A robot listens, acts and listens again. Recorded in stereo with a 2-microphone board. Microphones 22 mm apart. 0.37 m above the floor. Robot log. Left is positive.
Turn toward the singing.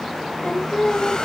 note: The singing: about 40° left or 140° left.
cmd yaw +40
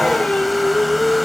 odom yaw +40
note: So it is at 105° left.
cmd yaw +105
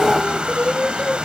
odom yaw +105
note: The singing is now 50° left.
cmd yaw +50
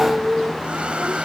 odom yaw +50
end: Found it: singing, straight ahead.